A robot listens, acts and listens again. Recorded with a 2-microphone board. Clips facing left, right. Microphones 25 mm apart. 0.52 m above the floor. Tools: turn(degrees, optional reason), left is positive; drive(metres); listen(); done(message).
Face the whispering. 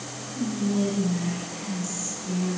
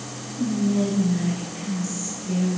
turn(degrees=-30)
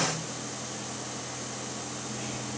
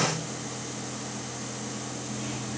listen()
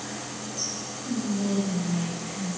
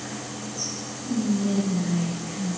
turn(degrees=20, reason="So it is at 20° left.")
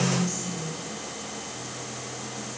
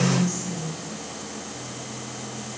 done("Found it: whispering, straight ahead, 1 to 2 m away.")